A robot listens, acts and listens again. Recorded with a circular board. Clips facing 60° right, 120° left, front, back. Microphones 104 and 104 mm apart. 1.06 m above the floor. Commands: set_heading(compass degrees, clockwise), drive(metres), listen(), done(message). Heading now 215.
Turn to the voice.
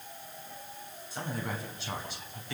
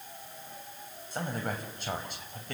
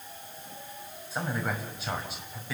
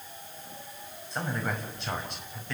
set_heading(130)
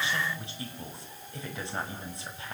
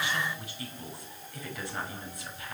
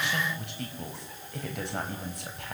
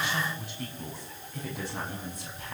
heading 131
done("Facing the man speaking, over 4 m away.")